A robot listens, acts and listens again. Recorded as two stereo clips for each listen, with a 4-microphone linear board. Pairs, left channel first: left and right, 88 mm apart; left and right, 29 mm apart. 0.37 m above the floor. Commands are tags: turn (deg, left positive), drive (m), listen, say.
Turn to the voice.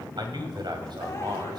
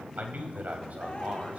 <turn deg="-60"/>
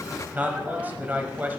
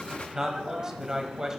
<turn deg="-25"/>
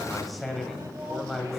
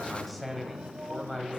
<say>Facing the man speaking, 2 to 4 m away.</say>